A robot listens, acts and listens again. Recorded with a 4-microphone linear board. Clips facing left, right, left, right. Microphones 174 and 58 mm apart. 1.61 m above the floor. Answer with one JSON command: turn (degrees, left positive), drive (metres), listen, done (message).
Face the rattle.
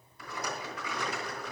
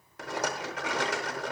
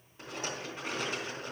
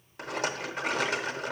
{"turn": -90}
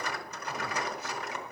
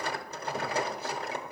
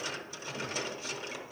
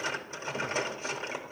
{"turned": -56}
{"turn": -35}
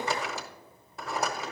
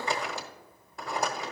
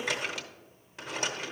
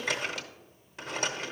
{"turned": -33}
{"done": "Found it: a rattle, straight ahead, under 1 m away."}